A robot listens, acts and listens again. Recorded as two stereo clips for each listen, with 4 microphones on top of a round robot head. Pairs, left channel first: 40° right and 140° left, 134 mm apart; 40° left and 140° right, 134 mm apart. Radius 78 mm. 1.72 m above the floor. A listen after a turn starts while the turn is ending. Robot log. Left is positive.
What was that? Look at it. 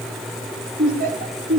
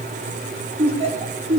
note: The laughter: 165° left.
cmd yaw +165
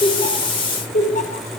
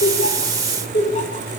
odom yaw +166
end: Found it: laughter, straight ahead.